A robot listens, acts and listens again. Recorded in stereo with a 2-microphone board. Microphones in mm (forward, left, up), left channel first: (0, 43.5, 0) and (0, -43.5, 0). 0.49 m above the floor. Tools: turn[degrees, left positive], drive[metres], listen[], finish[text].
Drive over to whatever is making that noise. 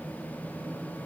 Action: listen[]
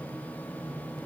Action: listen[]
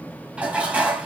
Thought: The dishes clattering: about 15° right or 165° right.
Action: turn[-15]
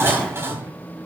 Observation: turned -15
Thought: So it is at 150° right.
Action: turn[-150]
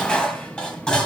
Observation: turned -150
Thought: The dishes clattering is now 10° left.
Action: turn[10]
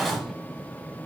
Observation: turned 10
Action: drive[1.0]
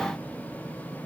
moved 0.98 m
Action: listen[]
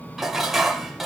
Action: drive[1.0]
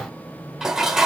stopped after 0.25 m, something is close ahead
Action: finish[I am next to the dishes clattering.]